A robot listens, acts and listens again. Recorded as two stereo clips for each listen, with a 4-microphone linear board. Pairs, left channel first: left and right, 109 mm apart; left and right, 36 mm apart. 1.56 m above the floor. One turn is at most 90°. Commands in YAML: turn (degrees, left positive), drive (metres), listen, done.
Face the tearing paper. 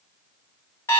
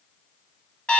listen: true
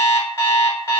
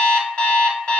listen: true
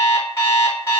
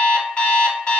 done: "I can't make out tearing paper, only an alarm clock."